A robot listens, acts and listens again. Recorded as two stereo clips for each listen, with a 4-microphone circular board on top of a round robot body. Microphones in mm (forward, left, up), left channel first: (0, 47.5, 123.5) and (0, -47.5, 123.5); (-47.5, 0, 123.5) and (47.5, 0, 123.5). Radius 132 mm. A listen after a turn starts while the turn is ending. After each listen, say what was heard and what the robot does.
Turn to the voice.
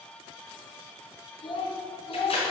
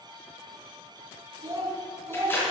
The child speaking: 60° left. Turn 60° left.
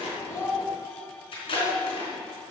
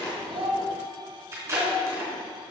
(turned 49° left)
The child speaking is now 20° left. Turn 20° left.
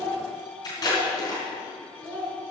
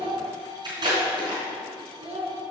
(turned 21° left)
The child speaking is now 15° left. Turn 15° left.
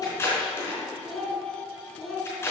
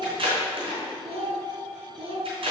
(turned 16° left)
Facing the child speaking.